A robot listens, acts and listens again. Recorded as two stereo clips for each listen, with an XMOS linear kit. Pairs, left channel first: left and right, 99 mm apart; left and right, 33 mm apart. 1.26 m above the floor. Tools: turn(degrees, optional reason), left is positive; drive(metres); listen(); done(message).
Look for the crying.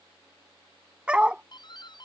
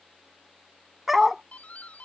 listen()
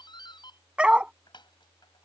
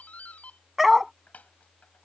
listen()
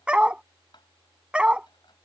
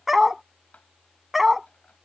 done("I can't make out crying to turn to.")